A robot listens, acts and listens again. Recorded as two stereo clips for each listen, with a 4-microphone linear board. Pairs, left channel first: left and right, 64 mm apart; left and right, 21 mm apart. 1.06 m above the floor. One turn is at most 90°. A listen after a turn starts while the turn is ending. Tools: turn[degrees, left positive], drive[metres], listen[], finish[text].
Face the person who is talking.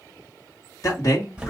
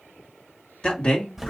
Thought: The man speaking: about 60° left or 120° left.
Action: turn[60]
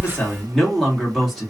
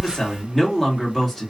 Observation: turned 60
Action: finish[Found it: a man speaking, straight ahead.]